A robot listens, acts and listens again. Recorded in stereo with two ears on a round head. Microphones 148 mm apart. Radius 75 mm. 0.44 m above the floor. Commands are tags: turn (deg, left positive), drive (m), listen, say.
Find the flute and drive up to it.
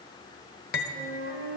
<turn deg="-60"/>
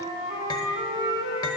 <turn deg="-30"/>
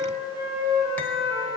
<turn deg="-15"/>
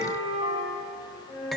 <drive m="1.0"/>
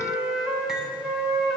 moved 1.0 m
<drive m="1.0"/>
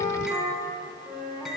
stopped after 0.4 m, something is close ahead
<turn deg="-15"/>
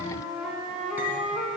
<say>Arrived at the flute, straight ahead.</say>